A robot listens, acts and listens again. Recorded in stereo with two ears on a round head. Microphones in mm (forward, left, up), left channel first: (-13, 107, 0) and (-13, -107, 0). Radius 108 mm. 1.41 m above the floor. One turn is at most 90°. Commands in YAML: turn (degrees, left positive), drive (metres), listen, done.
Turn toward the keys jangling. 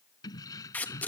turn: 30
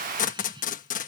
turn: -20
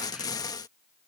listen: true
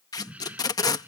turn: -10
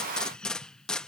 done: "Found it: keys jangling, straight ahead."